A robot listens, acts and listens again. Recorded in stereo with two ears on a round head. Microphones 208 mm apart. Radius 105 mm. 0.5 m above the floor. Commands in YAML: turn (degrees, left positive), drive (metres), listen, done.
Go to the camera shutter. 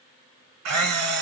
turn: -90
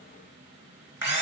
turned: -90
turn: -10
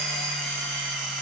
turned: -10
drive: 1.0
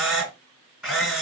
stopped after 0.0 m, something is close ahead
done: "Blocked. The camera shutter is further on, straight ahead."